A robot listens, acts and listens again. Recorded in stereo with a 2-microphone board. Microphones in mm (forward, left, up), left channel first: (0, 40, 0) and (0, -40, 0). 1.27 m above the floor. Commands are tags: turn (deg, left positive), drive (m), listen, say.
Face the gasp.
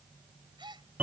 <turn deg="-70"/>
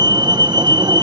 <listen/>
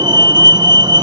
<say>I heard a gasp, but can't make it out now. It was about straight ahead or 40° right.</say>